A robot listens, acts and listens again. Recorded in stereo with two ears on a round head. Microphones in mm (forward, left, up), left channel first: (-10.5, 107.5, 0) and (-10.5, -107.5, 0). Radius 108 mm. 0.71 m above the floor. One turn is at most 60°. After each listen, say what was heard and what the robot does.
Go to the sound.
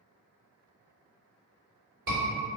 The scream: about 65° right or 115° right. Turn 60° right.
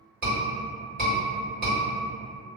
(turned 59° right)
So it is at 40° right. Turn 40° right.
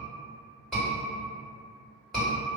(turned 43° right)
Drive 1.0 m forward.
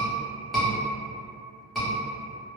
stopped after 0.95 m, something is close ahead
I am next to the scream.